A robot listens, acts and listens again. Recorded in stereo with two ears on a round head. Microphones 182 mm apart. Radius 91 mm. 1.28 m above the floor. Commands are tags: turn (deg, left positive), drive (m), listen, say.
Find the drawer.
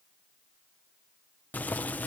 <listen/>
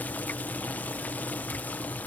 <listen/>
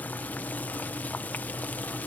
<say>I can't make out a drawer, only boiling.</say>